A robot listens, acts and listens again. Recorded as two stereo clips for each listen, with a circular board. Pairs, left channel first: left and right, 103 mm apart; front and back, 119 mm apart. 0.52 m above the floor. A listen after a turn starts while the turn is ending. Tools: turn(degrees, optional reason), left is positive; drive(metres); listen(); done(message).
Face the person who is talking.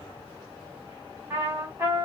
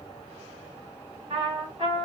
listen()
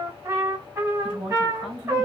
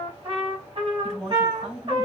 turn(degrees=-90, reason="The woman speaking: 90° right.")
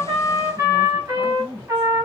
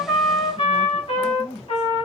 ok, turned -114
turn(degrees=25, reason="The woman speaking is now 25° left.")
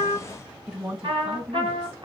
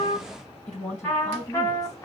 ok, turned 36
turn(degrees=-10, reason="The woman speaking is now 10° right.")
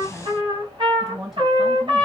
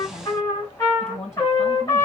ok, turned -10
done("Found it: a woman speaking, straight ahead.")